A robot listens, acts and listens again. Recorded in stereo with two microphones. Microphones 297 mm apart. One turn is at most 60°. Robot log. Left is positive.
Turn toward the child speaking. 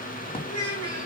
note: The child speaking: about 75° left or 105° left.
cmd yaw +60
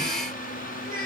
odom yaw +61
note: So it is at 35° left.
cmd yaw +35
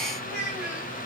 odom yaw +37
end: Found it: a child speaking, straight ahead.